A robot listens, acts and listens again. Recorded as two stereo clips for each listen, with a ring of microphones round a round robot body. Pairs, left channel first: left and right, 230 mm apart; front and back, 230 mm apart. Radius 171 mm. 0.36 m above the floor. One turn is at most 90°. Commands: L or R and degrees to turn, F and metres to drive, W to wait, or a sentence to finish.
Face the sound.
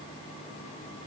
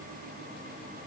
W
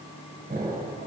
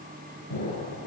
R35
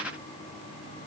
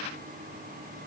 I heard an explosion from this way, but can't make it out now.